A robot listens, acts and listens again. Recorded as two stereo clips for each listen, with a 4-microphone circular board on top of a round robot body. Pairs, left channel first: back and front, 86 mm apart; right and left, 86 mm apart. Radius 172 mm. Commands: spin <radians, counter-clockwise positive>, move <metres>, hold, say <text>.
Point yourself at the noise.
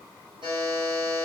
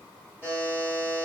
spin -0.44
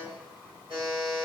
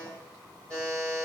spin -0.17
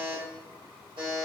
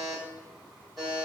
say Found it: a buzzer, straight ahead.